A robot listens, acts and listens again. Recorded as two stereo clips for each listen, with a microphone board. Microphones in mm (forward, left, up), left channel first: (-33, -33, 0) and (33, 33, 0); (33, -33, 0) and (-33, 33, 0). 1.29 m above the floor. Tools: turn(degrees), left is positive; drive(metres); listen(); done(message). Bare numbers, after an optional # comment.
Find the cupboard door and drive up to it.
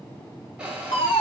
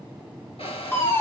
# The cupboard door: 35° right.
turn(-35)
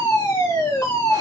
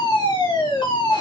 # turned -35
listen()
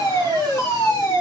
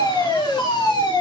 listen()
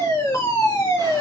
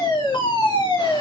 done("Facing where the cupboard door came from. I can't hear it now. I did not reach it.")